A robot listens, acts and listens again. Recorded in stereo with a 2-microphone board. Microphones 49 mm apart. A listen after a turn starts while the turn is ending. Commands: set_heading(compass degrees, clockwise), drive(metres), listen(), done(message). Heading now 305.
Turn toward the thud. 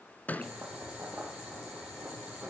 set_heading(270)
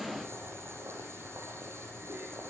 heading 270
listen()
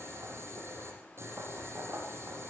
done("I heard a thud, but can't make it out now. It was about straight ahead or 110° left.")